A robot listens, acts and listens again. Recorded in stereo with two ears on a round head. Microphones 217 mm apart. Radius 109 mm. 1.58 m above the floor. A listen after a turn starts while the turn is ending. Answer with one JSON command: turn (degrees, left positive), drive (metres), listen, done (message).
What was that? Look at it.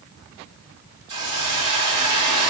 {"turn": -90}
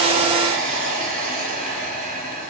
{"done": "Found it: a hiss, straight ahead."}